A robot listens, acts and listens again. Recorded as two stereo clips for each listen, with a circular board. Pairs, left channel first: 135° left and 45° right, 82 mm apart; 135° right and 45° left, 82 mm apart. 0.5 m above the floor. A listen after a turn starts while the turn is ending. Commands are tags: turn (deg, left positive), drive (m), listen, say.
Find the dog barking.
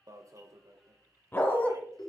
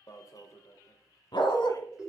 <turn deg="-155"/>
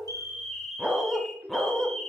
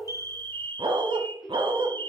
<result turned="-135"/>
<turn deg="55"/>
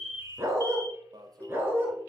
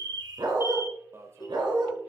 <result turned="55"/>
<turn deg="20"/>
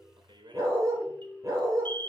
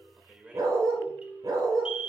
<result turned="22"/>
<say>Facing the dog barking, 2 to 4 m away.</say>